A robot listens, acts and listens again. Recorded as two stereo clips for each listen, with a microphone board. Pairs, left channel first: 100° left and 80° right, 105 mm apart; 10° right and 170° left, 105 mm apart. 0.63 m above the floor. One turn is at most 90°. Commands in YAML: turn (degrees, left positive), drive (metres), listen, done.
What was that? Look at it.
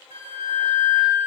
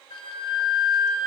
turn: -50
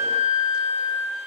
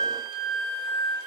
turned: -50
done: "Found it: a flute, straight ahead."